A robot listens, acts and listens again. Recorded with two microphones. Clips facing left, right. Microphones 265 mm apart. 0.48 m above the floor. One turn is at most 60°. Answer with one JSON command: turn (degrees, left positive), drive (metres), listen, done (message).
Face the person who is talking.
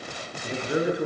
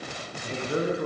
{"turn": 30}
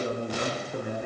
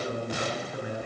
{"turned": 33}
{"turn": 60}
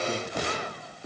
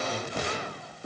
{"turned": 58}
{"turn": 60}
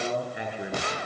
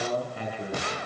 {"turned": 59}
{"turn": 15}
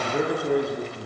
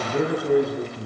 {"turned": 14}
{"done": "Found it: a man speaking, straight ahead, over 4 m away."}